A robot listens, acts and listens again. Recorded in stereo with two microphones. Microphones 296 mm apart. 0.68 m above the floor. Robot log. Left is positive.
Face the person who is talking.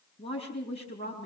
note: The woman speaking: about 20° left or 160° left.
cmd yaw +20
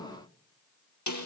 cmd idle
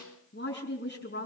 note: So it is at 140° left.
cmd yaw +140
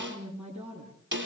end: Facing the woman speaking, over 4 m away.